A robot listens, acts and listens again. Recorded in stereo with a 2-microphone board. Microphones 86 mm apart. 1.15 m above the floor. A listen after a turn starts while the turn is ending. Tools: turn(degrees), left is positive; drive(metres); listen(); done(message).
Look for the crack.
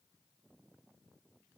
listen()
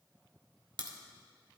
turn(degrees=-65)
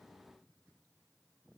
listen()
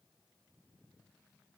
done("I heard a crack, but can't make it out now. It was about straight ahead or 50° right.")